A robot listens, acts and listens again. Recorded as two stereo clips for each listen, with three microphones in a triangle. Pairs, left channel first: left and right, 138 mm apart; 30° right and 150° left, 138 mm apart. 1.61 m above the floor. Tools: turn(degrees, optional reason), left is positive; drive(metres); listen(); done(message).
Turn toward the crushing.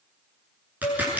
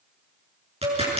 turn(degrees=-170, reason="The crushing: 170° right.")
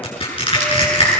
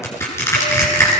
turn(degrees=40, reason="The crushing is now 40° left.")
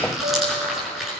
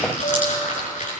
done("Facing the crushing.")